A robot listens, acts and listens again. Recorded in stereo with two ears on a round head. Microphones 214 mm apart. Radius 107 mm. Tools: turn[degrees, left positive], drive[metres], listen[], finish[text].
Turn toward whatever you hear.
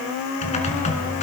Thought: The typing on a keyboard: about 30° left or 150° left.
Action: turn[30]
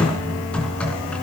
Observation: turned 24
Action: finish[Found it: typing on a keyboard, straight ahead.]